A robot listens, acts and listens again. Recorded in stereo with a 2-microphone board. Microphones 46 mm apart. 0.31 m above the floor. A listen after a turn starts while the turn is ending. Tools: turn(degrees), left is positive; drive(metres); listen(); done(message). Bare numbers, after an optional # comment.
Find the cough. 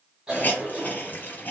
turn(-30)
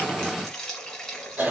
# So it is at 135° right.
turn(-135)
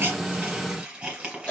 # The cough is now 35° left.
turn(35)
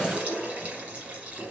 # The cough is now 30° left.
turn(30)
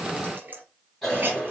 done("Facing the cough.")